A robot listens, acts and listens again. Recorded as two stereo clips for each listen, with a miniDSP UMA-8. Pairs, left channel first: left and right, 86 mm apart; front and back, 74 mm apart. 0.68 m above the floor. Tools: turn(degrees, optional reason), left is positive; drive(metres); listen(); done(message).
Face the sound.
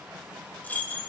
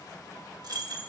turn(degrees=160, reason="The keys jangling: 160° left.")
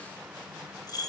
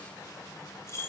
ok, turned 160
turn(degrees=50, reason="The keys jangling is now 50° left.")
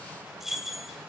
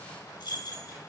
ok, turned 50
done("Found it: keys jangling, straight ahead, 1 to 2 m away.")